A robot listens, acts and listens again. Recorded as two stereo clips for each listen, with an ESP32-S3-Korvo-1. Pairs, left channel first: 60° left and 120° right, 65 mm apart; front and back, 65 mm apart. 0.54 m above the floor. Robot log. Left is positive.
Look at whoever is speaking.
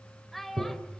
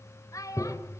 note: The child speaking: 25° right.
cmd yaw -25
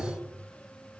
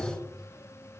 cmd idle
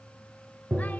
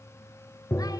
cmd idle
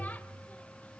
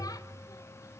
end: I heard a child speaking from this way, but can't make it out now.